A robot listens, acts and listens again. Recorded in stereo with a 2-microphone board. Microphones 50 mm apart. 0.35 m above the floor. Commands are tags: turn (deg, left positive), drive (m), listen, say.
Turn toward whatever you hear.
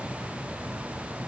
<listen/>
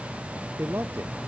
<turn deg="-55"/>
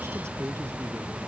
<turn deg="-65"/>
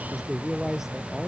<turn deg="-10"/>
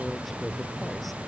<listen/>
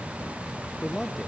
<say>Found it: a man speaking, straight ahead.</say>